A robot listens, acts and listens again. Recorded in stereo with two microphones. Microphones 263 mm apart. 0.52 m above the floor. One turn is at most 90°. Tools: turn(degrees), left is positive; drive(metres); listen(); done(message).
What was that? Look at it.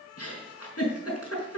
turn(degrees=65)
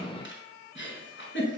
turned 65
turn(degrees=45)
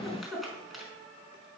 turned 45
done("Facing the giggle.")